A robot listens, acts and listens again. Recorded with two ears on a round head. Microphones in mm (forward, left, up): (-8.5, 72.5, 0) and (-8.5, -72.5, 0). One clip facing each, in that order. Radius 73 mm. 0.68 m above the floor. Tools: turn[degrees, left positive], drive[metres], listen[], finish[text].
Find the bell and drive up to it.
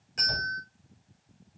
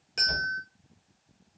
Thought: The bell: about 65° right or 115° right.
Action: turn[-65]
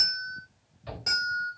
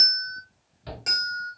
Thought: So it is at 25° right.
Action: turn[-25]
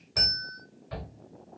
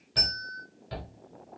Thought: The bell is now 15° left.
Action: turn[15]
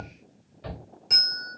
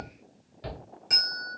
Action: drive[1.0]
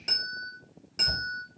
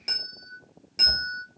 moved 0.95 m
Thought: The bell is now 15° right.
Action: turn[-15]
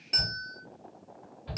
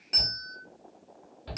Action: drive[1.0]
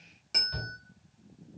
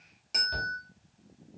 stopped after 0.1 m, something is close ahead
Action: finish[I am next to the bell.]